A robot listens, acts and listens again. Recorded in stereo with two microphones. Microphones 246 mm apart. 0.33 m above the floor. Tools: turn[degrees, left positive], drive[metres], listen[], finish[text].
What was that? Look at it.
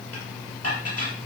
Action: turn[90]
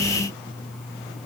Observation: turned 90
Action: listen[]
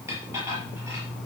Thought: The dishes clattering is now 10° right.
Action: turn[-10]
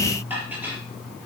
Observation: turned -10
Action: finish[Facing the dishes clattering, over 4 m away.]